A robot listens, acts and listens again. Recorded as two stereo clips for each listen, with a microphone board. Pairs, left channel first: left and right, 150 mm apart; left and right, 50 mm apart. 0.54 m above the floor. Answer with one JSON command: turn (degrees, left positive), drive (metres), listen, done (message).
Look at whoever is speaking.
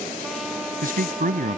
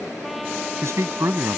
{"turn": -70}
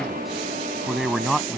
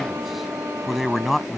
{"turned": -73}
{"done": "Found it: a man speaking, straight ahead."}